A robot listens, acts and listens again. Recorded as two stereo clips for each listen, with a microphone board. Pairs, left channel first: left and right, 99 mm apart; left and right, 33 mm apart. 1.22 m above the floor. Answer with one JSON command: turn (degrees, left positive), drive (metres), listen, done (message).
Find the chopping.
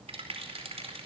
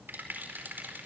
{"listen": true}
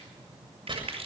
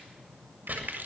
{"turn": -55}
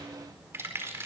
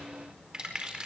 {"listen": true}
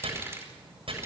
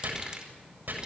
{"turn": -65}
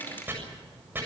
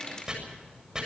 {"turn": -20}
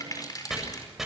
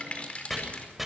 {"done": "Facing the chopping, over 4 m away."}